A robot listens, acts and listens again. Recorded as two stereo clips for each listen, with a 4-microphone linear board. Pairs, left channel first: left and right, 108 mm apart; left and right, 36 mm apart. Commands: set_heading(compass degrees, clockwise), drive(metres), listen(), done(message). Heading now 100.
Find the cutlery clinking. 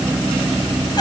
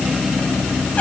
listen()
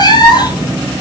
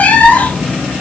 listen()
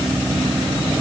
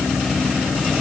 done("I can't make out cutlery clinking, only a cat meowing.")